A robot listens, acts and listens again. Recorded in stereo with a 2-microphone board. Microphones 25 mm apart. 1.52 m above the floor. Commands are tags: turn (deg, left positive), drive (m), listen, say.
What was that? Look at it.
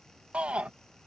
<turn deg="-50"/>
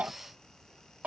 <turn deg="-80"/>
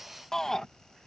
<turn deg="20"/>
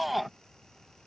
<say>Facing the shout.</say>